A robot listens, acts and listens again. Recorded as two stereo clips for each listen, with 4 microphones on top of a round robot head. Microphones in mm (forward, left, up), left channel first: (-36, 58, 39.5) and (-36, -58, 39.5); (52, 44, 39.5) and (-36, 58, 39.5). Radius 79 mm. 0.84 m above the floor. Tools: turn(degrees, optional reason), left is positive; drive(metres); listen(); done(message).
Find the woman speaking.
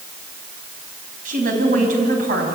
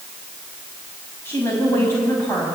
turn(degrees=-85, reason="The woman speaking: 85° right.")
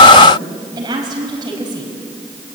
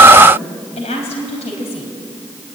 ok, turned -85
turn(degrees=-30, reason="The woman speaking is now 30° right.")
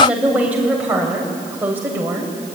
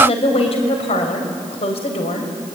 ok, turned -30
turn(degrees=-15, reason="The woman speaking is now 15° right.")
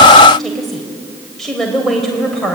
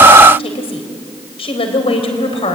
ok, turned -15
done("Facing the woman speaking, over 4 m away.")